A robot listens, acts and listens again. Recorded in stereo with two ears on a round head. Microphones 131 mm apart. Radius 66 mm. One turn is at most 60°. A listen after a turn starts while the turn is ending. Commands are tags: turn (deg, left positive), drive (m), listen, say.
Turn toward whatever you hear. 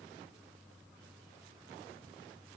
<listen/>
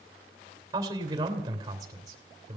<turn deg="-25"/>
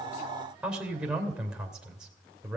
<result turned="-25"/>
<say>Facing the man speaking.</say>